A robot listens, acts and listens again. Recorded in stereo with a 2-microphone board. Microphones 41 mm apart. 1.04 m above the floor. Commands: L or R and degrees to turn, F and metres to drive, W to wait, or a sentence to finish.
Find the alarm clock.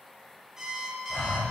R15
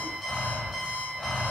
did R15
Found it: an alarm clock, straight ahead.